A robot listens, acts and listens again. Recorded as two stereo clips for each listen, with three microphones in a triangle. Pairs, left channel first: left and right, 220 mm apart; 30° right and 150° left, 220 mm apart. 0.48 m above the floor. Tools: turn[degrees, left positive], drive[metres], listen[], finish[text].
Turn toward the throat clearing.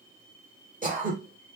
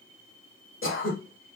Thought: The throat clearing: 40° right.
Action: turn[-40]
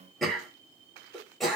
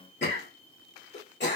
Action: finish[Found it: throat clearing, straight ahead, 1 to 2 m away.]